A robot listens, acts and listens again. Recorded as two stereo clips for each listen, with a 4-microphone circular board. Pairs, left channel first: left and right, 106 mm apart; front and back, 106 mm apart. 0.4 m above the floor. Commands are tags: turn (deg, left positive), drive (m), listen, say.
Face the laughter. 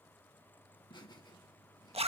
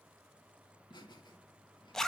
<turn deg="45"/>
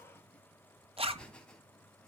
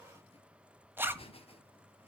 <turn deg="10"/>
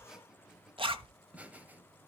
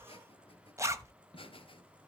<turn deg="-20"/>
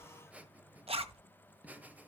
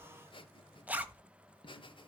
<turn deg="-15"/>
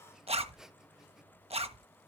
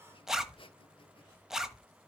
<say>Found it: laughter, straight ahead, 1 to 2 m away.</say>